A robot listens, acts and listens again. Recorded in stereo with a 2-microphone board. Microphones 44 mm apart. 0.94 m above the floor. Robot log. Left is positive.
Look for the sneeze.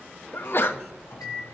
note: The sneeze: about 55° left or 125° left.
cmd yaw +55
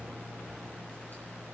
cmd idle
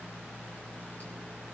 end: I heard a sneeze, but can't make it out now. It was about straight ahead or 70° left.